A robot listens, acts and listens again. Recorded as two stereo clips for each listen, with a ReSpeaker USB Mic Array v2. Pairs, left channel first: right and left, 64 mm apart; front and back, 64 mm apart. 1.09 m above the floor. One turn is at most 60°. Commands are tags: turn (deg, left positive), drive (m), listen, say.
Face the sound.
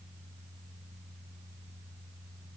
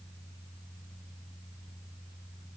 <listen/>
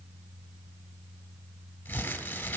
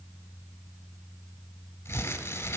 <turn deg="-30"/>
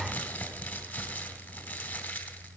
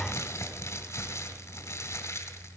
<turn deg="-25"/>
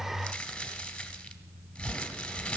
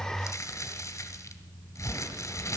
<turn deg="-15"/>
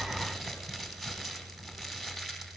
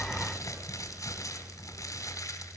<say>Found it: crumpling, straight ahead, 2 to 4 m away.</say>